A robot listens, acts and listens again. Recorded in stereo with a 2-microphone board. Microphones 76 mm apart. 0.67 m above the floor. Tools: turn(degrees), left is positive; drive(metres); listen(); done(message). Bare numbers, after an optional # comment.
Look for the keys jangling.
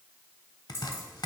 # The keys jangling: about 30° left or 150° left.
turn(30)
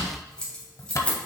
# So it is at 15° left.
turn(15)
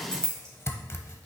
# The keys jangling is now 10° left.
turn(10)
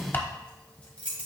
# The keys jangling is now 15° left.
turn(15)
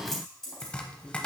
done("Facing the keys jangling, 2 to 4 m away.")